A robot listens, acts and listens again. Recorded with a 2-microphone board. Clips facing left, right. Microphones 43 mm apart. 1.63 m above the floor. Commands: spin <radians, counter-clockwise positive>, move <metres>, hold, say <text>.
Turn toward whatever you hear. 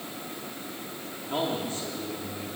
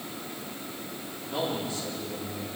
spin 0.70
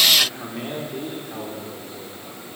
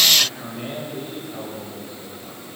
spin 1.92
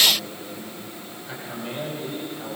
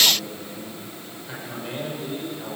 say Found it: a man speaking, straight ahead.